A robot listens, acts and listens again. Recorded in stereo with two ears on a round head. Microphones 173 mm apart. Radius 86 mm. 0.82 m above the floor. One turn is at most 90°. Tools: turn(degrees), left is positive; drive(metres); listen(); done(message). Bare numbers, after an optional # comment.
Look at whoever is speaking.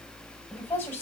turn(30)
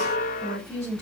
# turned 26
# So it is at 20° right.
turn(-20)
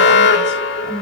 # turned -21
listen()
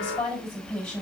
done("Found it: a woman speaking, straight ahead, over 4 m away.")